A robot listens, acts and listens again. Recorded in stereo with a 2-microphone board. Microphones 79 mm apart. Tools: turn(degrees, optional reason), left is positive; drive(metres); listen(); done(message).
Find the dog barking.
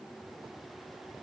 listen()
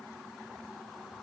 listen()
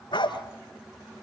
turn(degrees=90)
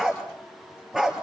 done("Facing the dog barking, 2 to 4 m away.")